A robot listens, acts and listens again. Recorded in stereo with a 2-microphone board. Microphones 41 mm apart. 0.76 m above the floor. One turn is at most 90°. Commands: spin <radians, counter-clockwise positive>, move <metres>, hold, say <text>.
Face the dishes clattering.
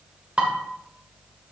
spin -0.52
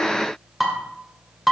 say Found it: dishes clattering, straight ahead, 1 to 2 m away.